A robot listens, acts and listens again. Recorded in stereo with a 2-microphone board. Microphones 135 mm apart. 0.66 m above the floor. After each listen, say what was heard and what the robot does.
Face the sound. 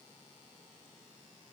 Keep listening.
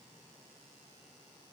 Keep listening.
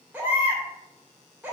Turn 30° right.
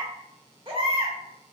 So it is at 140° right. Turn 140° right.
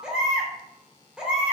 The baby crying is now 10° right. Turn 10° right.
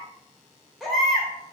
Found it: a baby crying, straight ahead.